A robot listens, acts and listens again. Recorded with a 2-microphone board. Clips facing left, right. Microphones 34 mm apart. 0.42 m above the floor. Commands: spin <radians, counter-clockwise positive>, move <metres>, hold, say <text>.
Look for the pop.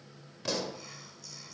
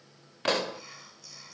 spin -0.96
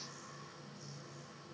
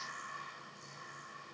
hold
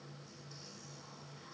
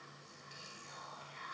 say I heard a pop, but can't make it out now. It was about straight ahead or 70° right.